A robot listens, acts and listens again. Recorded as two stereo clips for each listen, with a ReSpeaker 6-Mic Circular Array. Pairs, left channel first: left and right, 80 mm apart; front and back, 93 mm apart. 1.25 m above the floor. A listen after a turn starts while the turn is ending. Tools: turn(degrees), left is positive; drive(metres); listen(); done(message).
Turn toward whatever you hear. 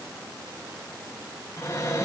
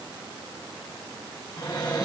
turn(degrees=45)
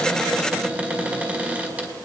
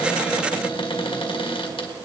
turn(degrees=-15)
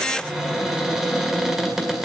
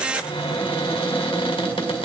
done("Facing the cupboard door, 2 to 4 m away.")